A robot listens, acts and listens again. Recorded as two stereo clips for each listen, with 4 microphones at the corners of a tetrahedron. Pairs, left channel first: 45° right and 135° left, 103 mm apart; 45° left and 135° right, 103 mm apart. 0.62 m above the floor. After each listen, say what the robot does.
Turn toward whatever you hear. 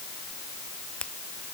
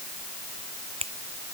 Turn 125° right.
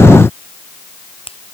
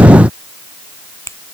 Turn 20° right.
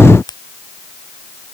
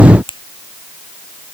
Facing the finger snap.